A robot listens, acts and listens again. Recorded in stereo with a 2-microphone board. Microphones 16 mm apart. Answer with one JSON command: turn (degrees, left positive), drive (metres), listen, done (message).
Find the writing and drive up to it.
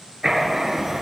{"turn": -25}
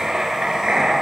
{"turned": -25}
{"turn": -125}
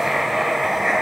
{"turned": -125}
{"turn": -15}
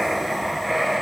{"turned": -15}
{"drive": 1.0}
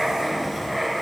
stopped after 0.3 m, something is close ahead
{"done": "Something is in my way. I am facing the writing but have not reached it."}